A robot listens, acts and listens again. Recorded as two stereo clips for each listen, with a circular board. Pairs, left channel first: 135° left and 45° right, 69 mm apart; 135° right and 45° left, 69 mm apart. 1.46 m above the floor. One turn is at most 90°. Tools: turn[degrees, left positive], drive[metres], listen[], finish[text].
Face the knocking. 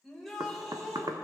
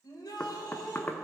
Thought: The knocking: 70° right.
Action: turn[-70]
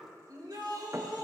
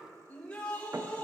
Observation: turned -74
Action: finish[Found it: knocking, straight ahead, under 1 m away.]